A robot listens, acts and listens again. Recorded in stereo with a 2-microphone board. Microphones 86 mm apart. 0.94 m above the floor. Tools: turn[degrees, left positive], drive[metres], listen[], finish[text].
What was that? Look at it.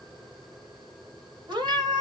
Thought: The cat meowing: about 60° right or 120° right.
Action: turn[-60]
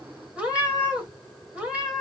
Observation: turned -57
Thought: So it is at 15° right.
Action: turn[-15]
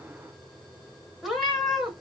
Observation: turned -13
Action: finish[Facing the cat meowing.]